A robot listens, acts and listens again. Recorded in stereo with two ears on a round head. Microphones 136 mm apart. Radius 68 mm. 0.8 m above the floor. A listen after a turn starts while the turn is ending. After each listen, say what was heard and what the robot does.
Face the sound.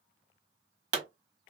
The pop: about 45° right or 135° right. Turn 45° right.
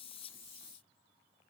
Keep listening.
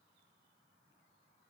I heard a pop, but can't make it out now. It was about straight ahead or 90° right.